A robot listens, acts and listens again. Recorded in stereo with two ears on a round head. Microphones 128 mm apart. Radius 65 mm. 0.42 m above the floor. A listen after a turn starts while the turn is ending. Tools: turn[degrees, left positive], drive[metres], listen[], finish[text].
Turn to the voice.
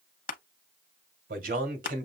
Thought: The man speaking: about 65° right or 115° right.
Action: turn[-65]
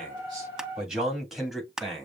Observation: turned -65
Action: finish[Facing the man speaking, 2 to 4 m away.]